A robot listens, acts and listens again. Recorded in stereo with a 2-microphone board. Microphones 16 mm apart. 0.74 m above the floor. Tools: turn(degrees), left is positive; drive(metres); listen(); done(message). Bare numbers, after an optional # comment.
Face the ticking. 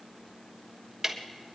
# The ticking: about 20° right or 160° right.
turn(-20)
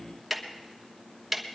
done("Found it: ticking, straight ahead, 1 to 2 m away.")